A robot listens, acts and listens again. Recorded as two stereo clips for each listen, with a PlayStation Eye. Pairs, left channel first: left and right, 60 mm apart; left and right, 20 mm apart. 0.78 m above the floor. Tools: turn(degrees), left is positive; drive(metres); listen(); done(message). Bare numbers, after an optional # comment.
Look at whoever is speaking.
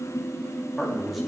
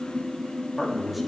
turn(30)
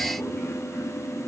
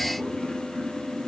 listen()
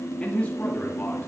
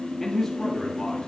# So it is at 155° left.
turn(155)
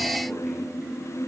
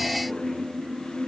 listen()
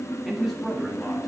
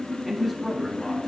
done("Found it: a man speaking, straight ahead.")